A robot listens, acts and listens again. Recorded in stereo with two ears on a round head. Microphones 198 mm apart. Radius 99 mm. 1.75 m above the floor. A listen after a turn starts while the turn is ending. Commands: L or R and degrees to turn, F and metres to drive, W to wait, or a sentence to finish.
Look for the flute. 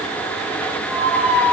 W
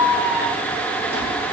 W
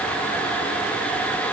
I can't make out a flute to turn to.